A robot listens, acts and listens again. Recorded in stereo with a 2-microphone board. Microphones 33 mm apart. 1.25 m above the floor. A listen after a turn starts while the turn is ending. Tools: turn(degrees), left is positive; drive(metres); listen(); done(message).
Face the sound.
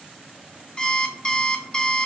turn(degrees=25)
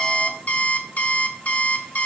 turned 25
turn(degrees=130)
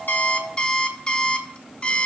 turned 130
turn(degrees=30)
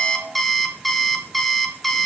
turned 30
done("Facing the alarm clock, under 1 m away.")